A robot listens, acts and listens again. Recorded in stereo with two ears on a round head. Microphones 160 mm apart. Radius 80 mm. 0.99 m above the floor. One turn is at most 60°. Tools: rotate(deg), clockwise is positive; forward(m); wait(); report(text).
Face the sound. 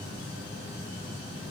wait()
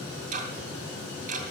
rotate(45)
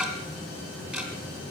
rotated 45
report("Found it: ticking, straight ahead, 2 to 4 m away.")